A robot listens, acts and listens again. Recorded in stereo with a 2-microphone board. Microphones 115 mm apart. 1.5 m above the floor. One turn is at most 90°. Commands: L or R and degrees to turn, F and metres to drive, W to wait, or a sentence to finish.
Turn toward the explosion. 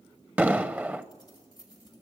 R15
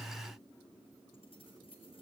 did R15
W
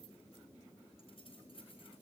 I heard an explosion, but can't make it out now. It was about straight ahead or 150° right.